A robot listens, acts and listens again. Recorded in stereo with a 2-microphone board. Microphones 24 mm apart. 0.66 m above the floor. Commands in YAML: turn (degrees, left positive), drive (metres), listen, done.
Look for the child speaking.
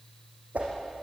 listen: true
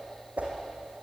listen: true
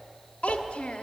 turn: 65
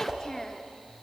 turn: 25
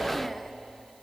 listen: true
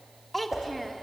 done: "Facing the child speaking."